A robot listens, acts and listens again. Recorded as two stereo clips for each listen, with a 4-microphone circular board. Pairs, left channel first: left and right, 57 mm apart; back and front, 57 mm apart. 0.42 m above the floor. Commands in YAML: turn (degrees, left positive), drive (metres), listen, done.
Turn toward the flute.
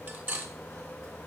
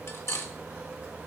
listen: true
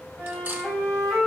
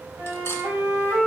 turn: 10
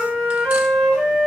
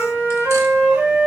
done: "Found it: a flute, straight ahead, 2 to 4 m away."